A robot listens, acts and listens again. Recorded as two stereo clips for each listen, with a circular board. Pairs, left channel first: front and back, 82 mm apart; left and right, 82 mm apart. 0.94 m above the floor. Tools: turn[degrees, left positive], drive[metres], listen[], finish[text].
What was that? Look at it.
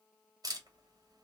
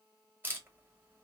Thought: The camera shutter: 155° right.
Action: turn[-155]
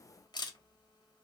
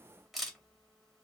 Action: finish[Found it: a camera shutter, straight ahead, under 1 m away.]